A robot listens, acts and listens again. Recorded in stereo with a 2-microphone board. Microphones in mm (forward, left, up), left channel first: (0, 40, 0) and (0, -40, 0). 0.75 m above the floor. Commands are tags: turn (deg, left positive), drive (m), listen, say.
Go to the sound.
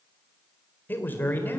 <turn deg="25"/>
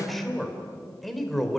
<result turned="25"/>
<drive m="1.0"/>
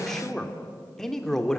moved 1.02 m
<drive m="1.0"/>
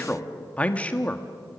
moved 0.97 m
<turn deg="20"/>
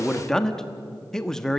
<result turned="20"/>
<turn deg="10"/>
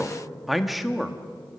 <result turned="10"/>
<drive m="1.0"/>
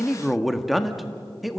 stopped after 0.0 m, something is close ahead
<say>Arrived at the man speaking, straight ahead.</say>